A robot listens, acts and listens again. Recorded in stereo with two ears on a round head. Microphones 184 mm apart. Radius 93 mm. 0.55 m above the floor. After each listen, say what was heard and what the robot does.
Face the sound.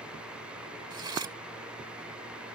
The cutlery clinking: about 20° right or 160° right. Turn 20° right.
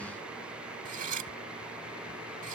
So it is at 135° right. Turn 135° right.
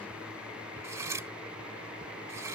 The cutlery clinking is now 15° right. Turn 15° right.
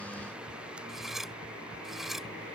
Found it: cutlery clinking, straight ahead.